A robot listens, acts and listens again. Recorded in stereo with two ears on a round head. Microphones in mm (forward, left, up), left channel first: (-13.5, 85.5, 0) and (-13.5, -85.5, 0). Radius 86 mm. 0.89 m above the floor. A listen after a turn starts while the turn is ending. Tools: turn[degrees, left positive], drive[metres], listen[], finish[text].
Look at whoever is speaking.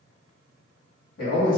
Thought: The man speaking: about 50° left or 130° left.
Action: turn[50]
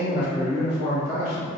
Thought: So it is at 70° left.
Action: turn[70]
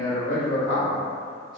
Action: finish[Found it: a man speaking, straight ahead, 1 to 2 m away.]